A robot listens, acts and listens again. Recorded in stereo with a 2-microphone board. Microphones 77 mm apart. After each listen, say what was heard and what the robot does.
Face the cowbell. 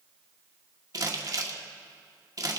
Keep listening.
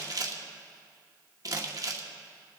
Keep listening.
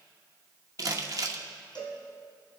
The cowbell: about 70° left or 110° left. Turn 70° left.
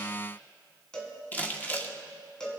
So it is at 10° left. Turn 10° left.
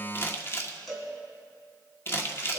Found it: a cowbell, straight ahead, 2 to 4 m away.